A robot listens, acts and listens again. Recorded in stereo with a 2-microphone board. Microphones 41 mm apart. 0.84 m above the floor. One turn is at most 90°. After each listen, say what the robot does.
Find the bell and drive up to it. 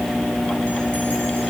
Keep listening.
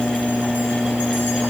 Keep listening.
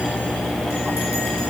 I can't make out a bell to turn to.